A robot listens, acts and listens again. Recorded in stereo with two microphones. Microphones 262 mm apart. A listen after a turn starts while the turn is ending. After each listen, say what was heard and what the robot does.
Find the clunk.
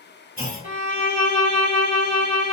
The clunk: about 35° right or 145° right. Turn 35° right.
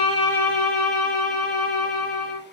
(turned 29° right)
Keep listening.
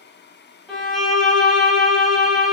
I heard a clunk, but can't make it out now. It was about 5° right or 115° right.